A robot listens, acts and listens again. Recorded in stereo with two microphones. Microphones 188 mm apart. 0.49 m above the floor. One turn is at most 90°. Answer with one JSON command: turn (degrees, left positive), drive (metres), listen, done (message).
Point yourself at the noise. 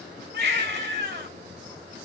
{"turn": -60}
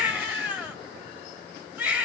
{"done": "Facing the baby crying, 2 to 4 m away."}